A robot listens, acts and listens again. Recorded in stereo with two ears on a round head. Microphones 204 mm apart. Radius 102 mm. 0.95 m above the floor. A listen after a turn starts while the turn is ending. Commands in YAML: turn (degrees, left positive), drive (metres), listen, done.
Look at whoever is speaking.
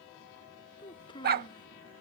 turn: 20
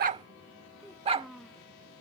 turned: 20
done: "Facing the child speaking."